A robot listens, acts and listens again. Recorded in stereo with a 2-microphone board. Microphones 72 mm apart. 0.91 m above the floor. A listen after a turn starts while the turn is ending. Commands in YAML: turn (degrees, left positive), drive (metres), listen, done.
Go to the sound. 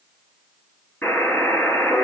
turn: 20
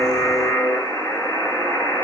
turn: 140
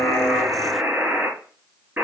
turn: -15
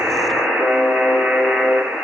drive: 1.0
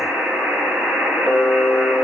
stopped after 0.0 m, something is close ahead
done: "Something is in my way. I am facing the buzzer but have not reached it."